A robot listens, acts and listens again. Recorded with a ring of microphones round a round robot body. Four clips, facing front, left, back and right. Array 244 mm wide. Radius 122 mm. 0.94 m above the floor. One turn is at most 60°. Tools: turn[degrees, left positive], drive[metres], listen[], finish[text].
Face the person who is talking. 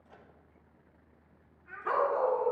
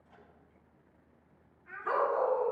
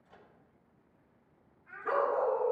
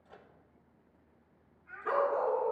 Thought: The child speaking: 45° left.
Action: turn[45]
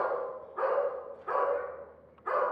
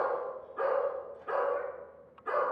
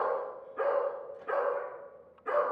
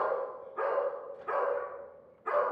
Action: listen[]
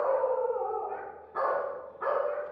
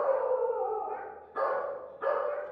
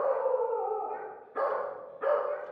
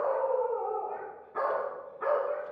Action: listen[]
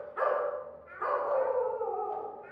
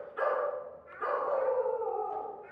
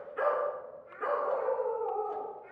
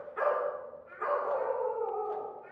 Action: finish[Found it: a child speaking, straight ahead, over 4 m away.]